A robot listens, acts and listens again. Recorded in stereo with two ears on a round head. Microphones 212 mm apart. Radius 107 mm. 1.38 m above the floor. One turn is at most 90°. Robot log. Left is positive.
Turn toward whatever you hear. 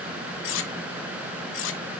note: The cutlery clinking: about 55° left or 125° left.
cmd yaw +55
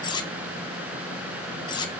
note: So it is at 20° left.
cmd yaw +20
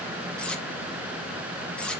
end: Found it: cutlery clinking, straight ahead, under 1 m away.